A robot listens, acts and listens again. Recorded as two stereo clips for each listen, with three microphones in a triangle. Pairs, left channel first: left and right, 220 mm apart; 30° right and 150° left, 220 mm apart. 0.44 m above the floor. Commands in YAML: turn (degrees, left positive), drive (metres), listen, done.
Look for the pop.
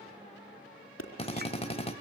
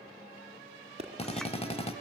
turn: 90
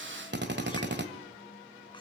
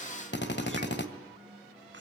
done: "Facing where the pop came from. I can't hear it now."